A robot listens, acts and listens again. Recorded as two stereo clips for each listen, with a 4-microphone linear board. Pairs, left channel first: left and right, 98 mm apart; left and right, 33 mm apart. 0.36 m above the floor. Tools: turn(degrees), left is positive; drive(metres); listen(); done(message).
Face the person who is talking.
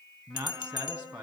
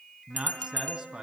turn(degrees=-40)
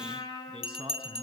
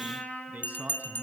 turn(degrees=-100)
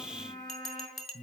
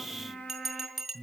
done("Found it: a man speaking, straight ahead, 2 to 4 m away.")